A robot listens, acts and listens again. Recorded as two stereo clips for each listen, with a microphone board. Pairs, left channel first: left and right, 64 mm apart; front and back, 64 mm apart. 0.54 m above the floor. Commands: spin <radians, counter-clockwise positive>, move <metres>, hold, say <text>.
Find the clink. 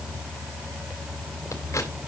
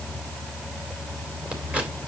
hold
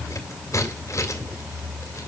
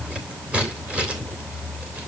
hold
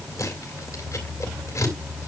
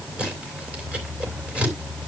say I can't make out a clink, only scissors.